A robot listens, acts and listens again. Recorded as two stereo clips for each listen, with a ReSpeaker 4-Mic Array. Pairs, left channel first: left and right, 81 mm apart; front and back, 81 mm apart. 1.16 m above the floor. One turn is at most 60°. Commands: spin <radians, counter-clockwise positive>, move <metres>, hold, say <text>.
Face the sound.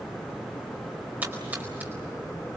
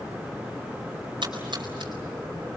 spin -1.05
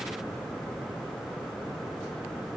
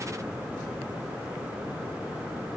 spin -1.05
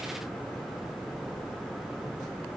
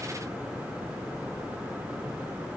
spin -0.70
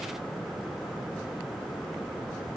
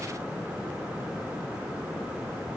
say Facing where the splash came from. I can't hear it now.